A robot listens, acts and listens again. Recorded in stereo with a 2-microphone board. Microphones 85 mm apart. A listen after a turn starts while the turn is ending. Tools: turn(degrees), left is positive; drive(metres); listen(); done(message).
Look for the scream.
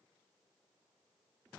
listen()
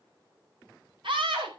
turn(degrees=-70)
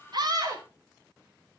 turn(degrees=-35)
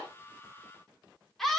done("Found it: a scream, straight ahead, over 4 m away.")